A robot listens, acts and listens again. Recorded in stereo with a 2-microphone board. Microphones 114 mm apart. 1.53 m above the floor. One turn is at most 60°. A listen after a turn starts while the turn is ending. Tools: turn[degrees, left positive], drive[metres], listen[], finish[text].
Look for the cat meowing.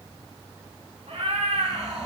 Thought: The cat meowing: about 65° right or 115° right.
Action: turn[-60]
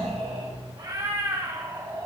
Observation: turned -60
Thought: So it is at 30° right.
Action: turn[-30]
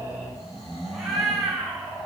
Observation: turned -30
Action: finish[Facing the cat meowing.]